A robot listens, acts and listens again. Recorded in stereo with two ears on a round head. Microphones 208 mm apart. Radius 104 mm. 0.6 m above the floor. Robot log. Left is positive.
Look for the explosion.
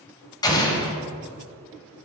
note: The explosion: about 20° left or 160° left.
cmd yaw +20
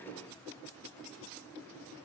cmd idle
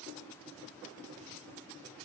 end: I heard an explosion, but can't make it out now. It was about straight ahead or 140° left.